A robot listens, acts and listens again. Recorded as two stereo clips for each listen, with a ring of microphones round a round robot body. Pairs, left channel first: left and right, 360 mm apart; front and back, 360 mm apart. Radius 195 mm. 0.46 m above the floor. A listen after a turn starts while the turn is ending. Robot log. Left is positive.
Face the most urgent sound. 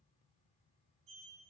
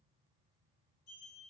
cmd idle
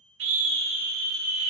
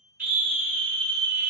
note: The scream: 110° right.
cmd yaw -110
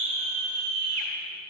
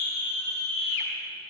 note: The scream is now 30° right.
cmd yaw -30
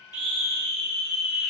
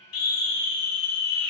end: Found it: a scream, straight ahead.